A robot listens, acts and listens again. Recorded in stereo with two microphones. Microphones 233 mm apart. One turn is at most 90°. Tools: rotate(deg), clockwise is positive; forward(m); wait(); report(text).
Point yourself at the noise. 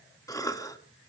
rotate(-30)
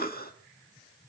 rotate(-90)
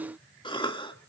rotate(-25)
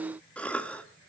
report("Found it: a cough, straight ahead, 1 to 2 m away.")